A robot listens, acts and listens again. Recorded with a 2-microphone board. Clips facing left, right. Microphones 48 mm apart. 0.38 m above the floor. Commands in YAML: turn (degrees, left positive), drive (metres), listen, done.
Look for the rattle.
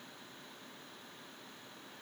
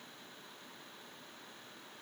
listen: true
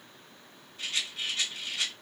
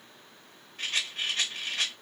turn: -45
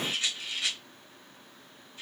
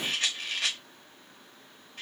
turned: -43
turn: -80
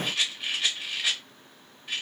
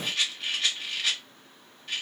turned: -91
turn: 10
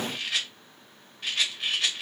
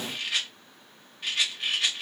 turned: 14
done: "Found it: a rattle, straight ahead."